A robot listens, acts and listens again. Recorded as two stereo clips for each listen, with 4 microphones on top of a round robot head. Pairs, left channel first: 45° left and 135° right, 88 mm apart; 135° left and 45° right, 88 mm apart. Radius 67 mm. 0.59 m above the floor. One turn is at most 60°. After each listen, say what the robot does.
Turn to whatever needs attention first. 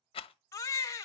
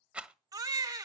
Found it: a baby crying, straight ahead.